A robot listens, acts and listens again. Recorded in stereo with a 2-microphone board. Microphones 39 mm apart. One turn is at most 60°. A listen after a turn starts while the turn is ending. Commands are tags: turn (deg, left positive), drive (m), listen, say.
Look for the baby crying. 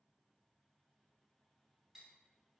<listen/>
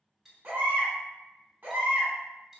<turn deg="-50"/>
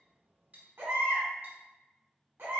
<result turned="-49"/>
<turn deg="-60"/>
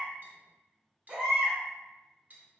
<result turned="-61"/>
<turn deg="-20"/>
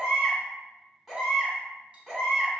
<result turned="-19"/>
<say>Facing the baby crying, 1 to 2 m away.</say>